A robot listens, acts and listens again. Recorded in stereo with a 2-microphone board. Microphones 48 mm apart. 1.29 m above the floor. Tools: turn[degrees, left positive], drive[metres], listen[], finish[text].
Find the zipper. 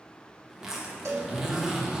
Action: turn[-30]
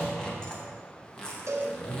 Thought: So it is at 15° left.
Action: turn[15]
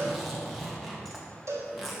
Action: finish[Facing the zipper, 1 to 2 m away.]